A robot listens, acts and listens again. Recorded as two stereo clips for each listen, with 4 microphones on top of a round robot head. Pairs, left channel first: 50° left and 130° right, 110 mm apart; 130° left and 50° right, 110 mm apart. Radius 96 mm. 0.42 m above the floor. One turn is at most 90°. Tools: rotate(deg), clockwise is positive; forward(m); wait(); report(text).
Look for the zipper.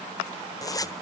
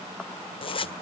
rotate(-90)
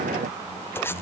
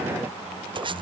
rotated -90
rotate(15)
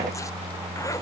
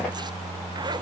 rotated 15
wait()
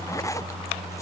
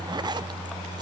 wait()
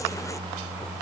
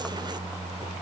report("Facing where the zipper came from. I can't hear it now.")